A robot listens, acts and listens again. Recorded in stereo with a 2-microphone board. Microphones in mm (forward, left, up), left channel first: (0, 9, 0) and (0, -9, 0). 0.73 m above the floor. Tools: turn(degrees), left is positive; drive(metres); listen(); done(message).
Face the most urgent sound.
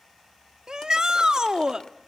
turn(degrees=-40)
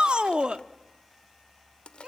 turn(degrees=-95)
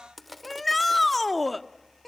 done("Found it: a shout, straight ahead, 1 to 2 m away.")